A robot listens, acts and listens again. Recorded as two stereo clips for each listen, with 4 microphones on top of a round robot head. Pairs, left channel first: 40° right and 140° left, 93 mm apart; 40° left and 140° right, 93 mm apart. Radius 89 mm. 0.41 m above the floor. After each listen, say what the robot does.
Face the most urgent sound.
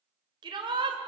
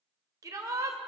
Turn 170° left.
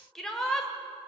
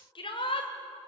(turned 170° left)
Turn 45° left.
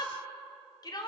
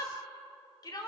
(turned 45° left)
Found it: a shout, straight ahead.